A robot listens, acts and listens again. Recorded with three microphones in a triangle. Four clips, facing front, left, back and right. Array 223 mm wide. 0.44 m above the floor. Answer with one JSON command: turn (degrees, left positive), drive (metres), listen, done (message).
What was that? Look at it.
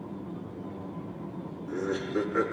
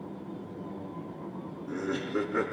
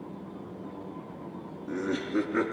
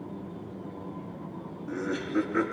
{"turn": 155}
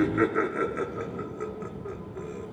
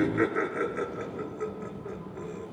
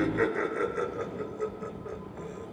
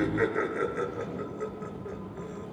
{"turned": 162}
{"done": "Found it: laughter, straight ahead, over 4 m away."}